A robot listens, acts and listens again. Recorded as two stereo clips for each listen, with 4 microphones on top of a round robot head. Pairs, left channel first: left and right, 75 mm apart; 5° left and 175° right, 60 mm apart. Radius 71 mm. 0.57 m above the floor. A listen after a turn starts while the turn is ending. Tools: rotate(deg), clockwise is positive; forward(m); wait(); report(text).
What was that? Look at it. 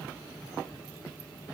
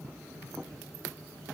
wait()
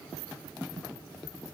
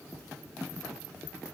wait()
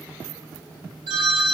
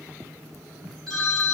rotate(75)
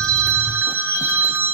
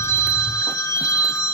rotate(30)
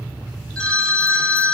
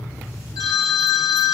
rotate(-15)
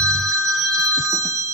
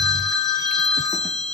report("Facing the phone ringing, 2 to 4 m away.")